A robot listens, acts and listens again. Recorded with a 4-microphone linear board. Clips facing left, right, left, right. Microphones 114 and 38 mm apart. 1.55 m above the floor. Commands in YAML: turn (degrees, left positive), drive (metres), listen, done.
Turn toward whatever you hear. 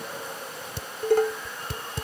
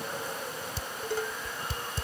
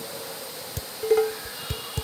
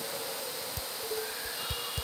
turn: 65
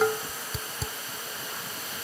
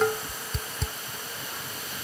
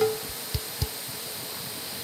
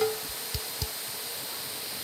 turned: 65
done: "Found it: dishes clattering, straight ahead."